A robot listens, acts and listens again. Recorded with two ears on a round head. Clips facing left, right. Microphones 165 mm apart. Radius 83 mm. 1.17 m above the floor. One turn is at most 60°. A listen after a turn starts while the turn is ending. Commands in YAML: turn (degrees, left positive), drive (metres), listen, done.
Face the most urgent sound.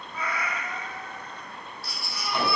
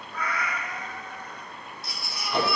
turn: -20
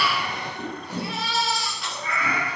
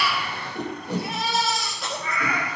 turn: -60
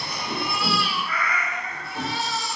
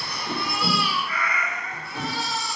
turn: -60
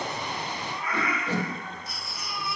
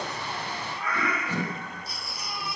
turn: -30
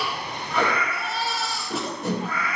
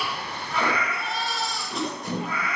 done: "Found it: a baby crying, straight ahead, 1 to 2 m away."